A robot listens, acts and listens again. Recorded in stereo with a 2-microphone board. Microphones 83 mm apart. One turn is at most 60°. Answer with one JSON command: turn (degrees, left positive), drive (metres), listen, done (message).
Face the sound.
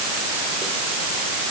{"listen": true}
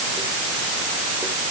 {"listen": true}
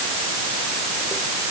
{"done": "I can't make out anything to turn to."}